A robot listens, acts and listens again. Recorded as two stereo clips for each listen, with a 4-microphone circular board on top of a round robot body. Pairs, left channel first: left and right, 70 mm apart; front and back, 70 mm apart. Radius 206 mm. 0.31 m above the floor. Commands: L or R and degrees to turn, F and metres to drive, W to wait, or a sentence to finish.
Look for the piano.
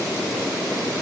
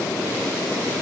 W
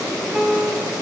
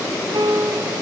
R170
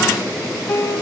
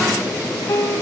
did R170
L30
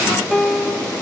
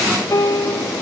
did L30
Found it: a piano, straight ahead, 2 to 4 m away.